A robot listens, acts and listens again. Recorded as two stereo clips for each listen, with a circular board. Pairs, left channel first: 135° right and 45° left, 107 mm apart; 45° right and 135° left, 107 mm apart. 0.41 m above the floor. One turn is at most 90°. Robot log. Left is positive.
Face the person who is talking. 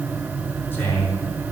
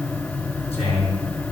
note: The man speaking: 65° right.
cmd yaw -65
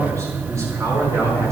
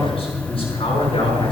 note: The man speaking is now 15° right.
cmd yaw -15
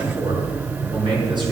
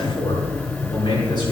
end: Found it: a man speaking, straight ahead, over 4 m away.